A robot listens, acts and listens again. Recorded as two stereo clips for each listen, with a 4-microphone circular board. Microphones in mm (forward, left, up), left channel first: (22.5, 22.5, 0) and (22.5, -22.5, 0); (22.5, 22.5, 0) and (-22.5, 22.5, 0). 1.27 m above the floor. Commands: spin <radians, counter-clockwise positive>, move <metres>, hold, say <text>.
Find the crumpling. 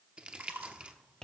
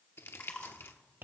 spin -0.44
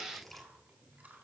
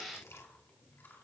say Facing the crumpling, under 1 m away.